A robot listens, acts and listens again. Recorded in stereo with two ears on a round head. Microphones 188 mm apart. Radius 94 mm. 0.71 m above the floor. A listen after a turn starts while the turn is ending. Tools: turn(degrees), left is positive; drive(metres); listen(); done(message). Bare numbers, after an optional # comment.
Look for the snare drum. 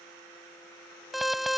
listen()
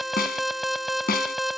# The snare drum: about 45° left or 135° left.
turn(45)
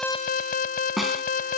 done("Found it: a snare drum, straight ahead.")